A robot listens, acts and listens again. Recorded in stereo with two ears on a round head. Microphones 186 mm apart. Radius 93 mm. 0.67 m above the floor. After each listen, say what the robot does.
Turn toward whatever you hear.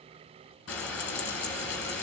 Turn 65° left.
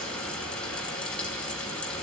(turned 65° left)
Found it: frying, straight ahead, 2 to 4 m away.